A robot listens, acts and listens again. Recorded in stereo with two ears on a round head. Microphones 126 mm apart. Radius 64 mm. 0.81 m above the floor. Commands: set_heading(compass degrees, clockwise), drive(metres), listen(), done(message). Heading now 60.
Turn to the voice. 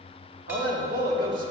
set_heading(125)
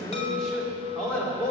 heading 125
set_heading(115)
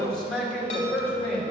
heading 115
set_heading(105)
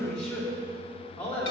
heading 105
set_heading(95)
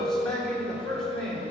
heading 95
done("Found it: a man speaking, straight ahead.")